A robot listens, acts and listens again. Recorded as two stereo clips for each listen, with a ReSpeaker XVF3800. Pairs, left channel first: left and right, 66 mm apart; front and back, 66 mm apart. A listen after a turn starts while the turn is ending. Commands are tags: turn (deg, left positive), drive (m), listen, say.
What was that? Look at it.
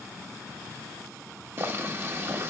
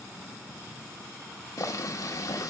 <turn deg="-35"/>
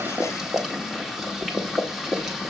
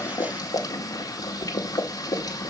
<say>Facing the boiling, 1 to 2 m away.</say>